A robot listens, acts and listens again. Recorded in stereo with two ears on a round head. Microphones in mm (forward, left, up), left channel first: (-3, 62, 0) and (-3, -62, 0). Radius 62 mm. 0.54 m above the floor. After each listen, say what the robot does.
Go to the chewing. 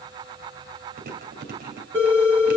Turn 65° right.
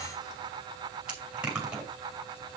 Turn 10° right.
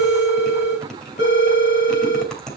Drive 1.0 m forward.
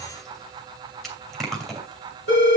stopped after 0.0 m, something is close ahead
Something is in my way. I am facing the chewing but have not reached it.